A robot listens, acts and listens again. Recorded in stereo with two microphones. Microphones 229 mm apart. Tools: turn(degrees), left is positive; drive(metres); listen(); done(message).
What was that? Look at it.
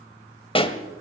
turn(degrees=25)
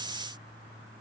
listen()
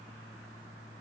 done("I heard a pop, but can't make it out now. It was about straight ahead or 130° left.")